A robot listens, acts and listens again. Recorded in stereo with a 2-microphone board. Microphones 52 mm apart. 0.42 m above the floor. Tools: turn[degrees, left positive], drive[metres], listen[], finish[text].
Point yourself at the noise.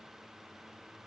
Action: listen[]
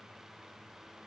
Action: listen[]
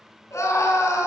Thought: The scream: about 70° left or 110° left.
Action: turn[70]
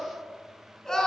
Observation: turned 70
Action: finish[Found it: a scream, straight ahead.]